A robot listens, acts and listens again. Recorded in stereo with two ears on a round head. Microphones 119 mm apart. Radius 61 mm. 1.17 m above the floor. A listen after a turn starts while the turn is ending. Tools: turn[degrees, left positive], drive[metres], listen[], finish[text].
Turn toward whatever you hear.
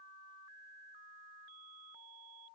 Action: listen[]
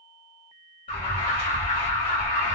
Thought: The alarm: about 40° left or 140° left.
Action: turn[40]
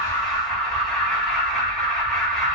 Action: finish[Found it: an alarm, straight ahead.]